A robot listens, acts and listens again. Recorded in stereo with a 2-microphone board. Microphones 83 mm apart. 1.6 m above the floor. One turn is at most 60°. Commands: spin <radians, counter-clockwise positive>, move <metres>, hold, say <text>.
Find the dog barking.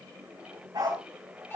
spin -1.05
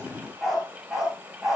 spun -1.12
say Facing the dog barking.